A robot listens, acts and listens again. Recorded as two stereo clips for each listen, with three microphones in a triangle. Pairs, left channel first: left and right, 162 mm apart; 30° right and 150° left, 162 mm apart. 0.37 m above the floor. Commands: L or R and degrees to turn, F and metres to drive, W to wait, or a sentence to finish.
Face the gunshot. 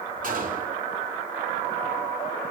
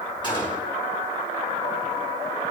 R85
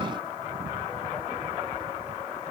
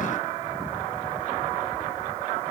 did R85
I heard a gunshot from this way, but can't make it out now.